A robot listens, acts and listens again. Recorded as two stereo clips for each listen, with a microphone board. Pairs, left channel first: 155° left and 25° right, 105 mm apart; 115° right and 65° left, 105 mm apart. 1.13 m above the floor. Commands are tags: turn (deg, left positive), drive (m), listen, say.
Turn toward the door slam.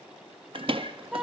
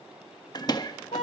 <turn deg="-60"/>
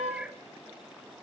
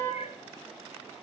<say>I heard a door slam from this way, but can't make it out now.</say>